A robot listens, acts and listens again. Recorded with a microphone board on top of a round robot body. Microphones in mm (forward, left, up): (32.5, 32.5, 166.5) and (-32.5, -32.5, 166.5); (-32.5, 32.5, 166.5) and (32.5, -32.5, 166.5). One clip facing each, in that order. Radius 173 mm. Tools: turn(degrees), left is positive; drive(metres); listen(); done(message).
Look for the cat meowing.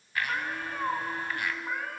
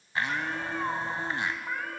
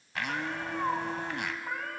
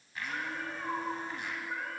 turn(degrees=135)
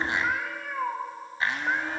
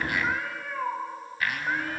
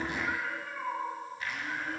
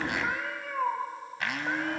turn(degrees=-30)
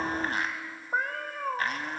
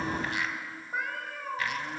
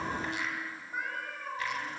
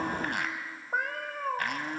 done("Facing the cat meowing.")